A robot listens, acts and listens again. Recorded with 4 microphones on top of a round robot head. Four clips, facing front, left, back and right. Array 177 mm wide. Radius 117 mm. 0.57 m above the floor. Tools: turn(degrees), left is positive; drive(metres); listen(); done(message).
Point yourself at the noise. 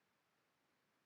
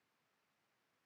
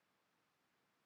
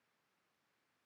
listen()
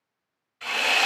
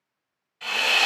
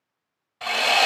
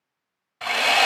turn(degrees=-145)
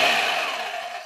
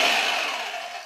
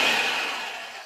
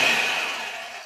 turn(degrees=10)
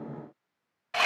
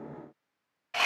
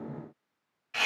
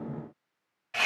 done("Facing the sawing.")